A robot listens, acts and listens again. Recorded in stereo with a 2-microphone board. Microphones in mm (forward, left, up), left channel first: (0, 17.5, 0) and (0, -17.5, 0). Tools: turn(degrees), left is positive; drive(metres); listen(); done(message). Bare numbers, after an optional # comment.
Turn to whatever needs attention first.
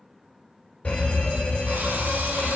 # The fire alarm: about 35° left or 145° left.
turn(35)
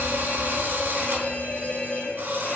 # So it is at 105° left.
turn(105)
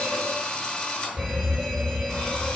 done("Found it: a fire alarm, straight ahead.")